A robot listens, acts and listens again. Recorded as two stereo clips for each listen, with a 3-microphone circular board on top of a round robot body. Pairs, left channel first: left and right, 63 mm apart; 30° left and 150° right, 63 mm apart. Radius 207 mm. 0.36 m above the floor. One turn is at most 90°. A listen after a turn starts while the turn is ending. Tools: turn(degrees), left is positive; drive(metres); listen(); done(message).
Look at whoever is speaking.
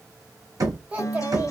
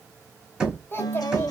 turn(degrees=-25)
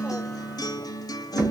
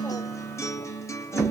listen()
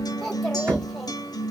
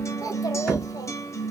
listen()
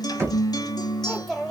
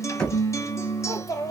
done("Facing the child speaking, 1 to 2 m away.")